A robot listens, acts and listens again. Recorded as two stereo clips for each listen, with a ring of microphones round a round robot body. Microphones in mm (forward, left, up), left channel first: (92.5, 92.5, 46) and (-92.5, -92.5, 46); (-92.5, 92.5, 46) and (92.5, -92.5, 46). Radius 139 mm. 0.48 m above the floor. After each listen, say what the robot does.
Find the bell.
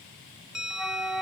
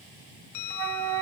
Turn 135° left.
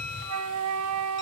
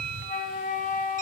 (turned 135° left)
Turn 15° left.
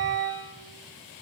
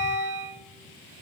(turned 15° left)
Keep listening.
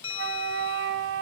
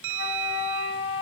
Facing the bell.